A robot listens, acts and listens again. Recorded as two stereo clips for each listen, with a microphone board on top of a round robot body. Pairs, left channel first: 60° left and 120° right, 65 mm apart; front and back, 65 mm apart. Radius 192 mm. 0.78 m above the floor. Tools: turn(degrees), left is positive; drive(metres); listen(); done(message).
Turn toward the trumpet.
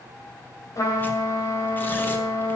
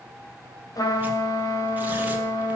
turn(degrees=25)
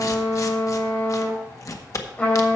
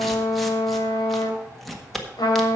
done("Facing the trumpet.")